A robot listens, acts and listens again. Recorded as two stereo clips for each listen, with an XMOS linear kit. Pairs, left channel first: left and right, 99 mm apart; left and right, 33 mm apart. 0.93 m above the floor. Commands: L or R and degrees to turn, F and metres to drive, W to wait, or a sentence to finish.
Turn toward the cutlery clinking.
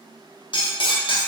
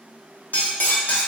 L60
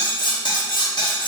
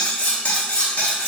L55
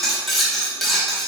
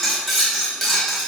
Found it: cutlery clinking, straight ahead, under 1 m away.